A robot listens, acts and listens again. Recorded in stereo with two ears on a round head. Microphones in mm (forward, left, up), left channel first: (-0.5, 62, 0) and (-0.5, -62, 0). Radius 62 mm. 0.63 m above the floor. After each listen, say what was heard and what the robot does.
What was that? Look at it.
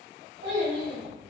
The child speaking: about 65° right or 115° right. Turn 65° right.
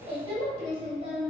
So it is at 35° right. Turn 35° right.
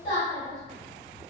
The child speaking is now 40° left. Turn 40° left.
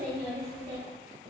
The child speaking is now 10° left. Turn 10° left.
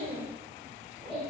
Found it: a child speaking, straight ahead.